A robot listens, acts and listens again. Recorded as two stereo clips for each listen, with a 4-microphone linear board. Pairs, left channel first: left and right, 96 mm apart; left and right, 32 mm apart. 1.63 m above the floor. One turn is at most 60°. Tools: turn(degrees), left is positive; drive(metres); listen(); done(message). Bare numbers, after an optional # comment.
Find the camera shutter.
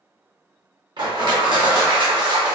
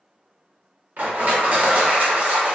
listen()
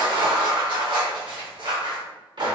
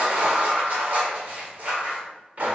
listen()
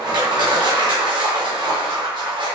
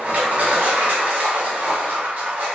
done("I can't make out a camera shutter to turn to.")